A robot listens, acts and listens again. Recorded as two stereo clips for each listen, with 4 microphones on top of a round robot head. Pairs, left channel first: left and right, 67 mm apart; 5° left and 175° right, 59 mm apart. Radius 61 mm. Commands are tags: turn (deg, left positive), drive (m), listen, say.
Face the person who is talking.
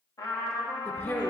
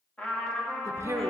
<turn deg="150"/>
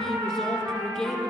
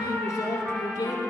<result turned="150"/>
<say>Found it: a woman speaking, straight ahead.</say>